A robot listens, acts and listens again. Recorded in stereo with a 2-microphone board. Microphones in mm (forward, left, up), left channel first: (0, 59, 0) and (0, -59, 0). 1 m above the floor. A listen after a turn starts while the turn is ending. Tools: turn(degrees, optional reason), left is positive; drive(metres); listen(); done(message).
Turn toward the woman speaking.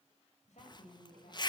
turn(degrees=90)
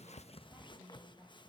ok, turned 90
turn(degrees=-15, reason="So it is at 15° right.")
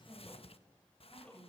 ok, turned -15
done("Found it: a woman speaking, straight ahead, over 4 m away.")